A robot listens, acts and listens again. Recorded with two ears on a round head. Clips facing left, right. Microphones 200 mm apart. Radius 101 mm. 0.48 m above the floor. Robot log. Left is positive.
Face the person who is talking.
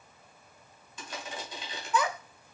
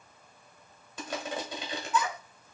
note: The child speaking: about 50° left or 130° left.
cmd yaw +50
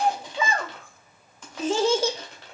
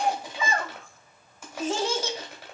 note: So it is at 70° left.
cmd yaw +70
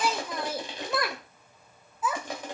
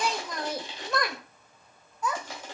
end: Facing the child speaking, under 1 m away.